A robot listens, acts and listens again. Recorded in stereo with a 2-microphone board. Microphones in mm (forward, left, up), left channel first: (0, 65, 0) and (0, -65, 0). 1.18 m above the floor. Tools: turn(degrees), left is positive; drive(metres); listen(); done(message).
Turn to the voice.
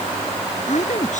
turn(degrees=70)
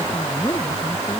turn(degrees=40)
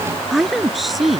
done("Facing the woman speaking.")